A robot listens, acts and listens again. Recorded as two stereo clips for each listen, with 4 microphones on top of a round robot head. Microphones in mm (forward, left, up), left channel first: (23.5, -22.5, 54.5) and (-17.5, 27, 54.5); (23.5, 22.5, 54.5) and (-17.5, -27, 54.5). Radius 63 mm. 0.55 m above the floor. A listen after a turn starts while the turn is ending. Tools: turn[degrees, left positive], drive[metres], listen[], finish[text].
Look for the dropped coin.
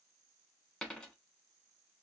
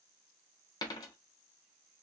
Thought: The dropped coin: 30° left.
Action: turn[30]
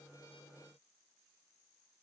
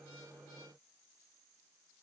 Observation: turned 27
Action: finish[I heard a dropped coin from this way, but can't make it out now.]